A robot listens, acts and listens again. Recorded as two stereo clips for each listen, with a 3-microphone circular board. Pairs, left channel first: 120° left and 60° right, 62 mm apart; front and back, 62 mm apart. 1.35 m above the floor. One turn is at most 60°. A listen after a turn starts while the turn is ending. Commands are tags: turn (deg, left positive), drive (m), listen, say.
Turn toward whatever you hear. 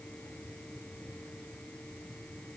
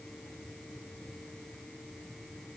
<listen/>
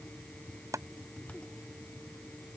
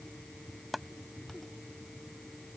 <turn deg="-60"/>
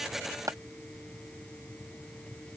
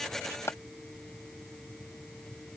<turn deg="-40"/>
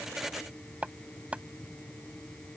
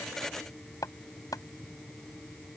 <turn deg="10"/>
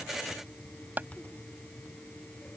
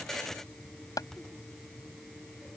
<say>Found it: chopping, straight ahead.</say>